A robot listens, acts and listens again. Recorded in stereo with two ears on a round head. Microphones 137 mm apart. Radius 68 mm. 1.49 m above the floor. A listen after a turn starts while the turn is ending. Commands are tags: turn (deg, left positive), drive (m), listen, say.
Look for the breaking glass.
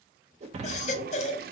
<turn deg="-45"/>
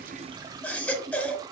<listen/>
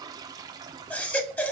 <say>I heard breaking glass, but can't make it out now. It was about straight ahead or 90° right.</say>